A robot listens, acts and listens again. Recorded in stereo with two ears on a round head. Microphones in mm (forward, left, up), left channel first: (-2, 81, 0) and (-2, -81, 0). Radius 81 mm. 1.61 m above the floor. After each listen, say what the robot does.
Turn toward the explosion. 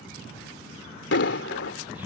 Turn 65° left.
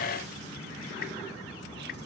Keep listening.
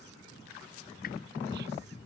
I heard an explosion, but can't make it out now. It was about straight ahead or 50° left.